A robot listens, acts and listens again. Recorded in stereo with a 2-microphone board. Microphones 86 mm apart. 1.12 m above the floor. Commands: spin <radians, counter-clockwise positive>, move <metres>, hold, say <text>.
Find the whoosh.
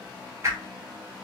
spin -0.52
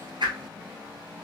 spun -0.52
spin -2.09
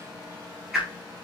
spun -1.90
spin -0.17
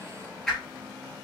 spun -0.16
say Found it: a whoosh, straight ahead, 2 to 4 m away.